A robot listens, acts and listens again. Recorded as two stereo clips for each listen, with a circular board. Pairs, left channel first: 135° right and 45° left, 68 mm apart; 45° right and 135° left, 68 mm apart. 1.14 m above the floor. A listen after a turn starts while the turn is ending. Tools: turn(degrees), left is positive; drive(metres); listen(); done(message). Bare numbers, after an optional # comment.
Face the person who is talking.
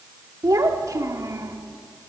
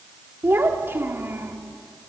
# The child speaking: 80° left.
turn(80)
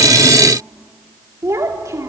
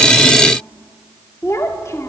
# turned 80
done("Found it: a child speaking, straight ahead.")